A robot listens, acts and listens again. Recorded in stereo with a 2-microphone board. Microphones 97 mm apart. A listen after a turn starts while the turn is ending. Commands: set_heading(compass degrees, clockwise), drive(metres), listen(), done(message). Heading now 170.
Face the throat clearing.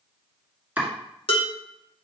listen()
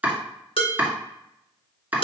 listen()
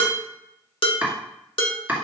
done("I can't make out throat clearing, only chopping and dishes clattering.")